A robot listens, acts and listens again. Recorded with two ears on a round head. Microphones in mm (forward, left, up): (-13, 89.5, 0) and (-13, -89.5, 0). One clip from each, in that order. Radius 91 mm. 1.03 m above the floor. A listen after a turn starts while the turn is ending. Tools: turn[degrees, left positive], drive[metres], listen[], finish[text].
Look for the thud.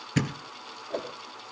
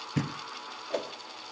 Thought: The thud: about 50° left or 130° left.
Action: turn[50]
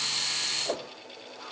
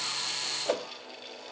Action: listen[]
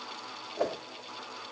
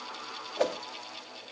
Action: finish[I heard a thud, but can't make it out now. It was about straight ahead or 80° left.]